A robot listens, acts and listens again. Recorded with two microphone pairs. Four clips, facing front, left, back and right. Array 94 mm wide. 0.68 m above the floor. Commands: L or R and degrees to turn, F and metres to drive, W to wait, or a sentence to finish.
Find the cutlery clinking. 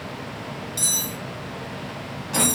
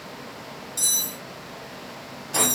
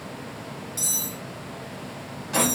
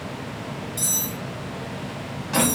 L10
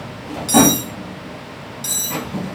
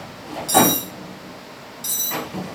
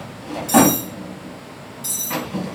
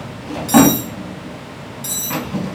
Found it: cutlery clinking, straight ahead, 1 to 2 m away.